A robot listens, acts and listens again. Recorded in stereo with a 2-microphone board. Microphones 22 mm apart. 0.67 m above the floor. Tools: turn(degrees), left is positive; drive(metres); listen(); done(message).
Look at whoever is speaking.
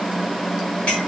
listen()
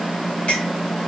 listen()
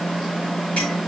done("I can't make out anyone speaking to turn to.")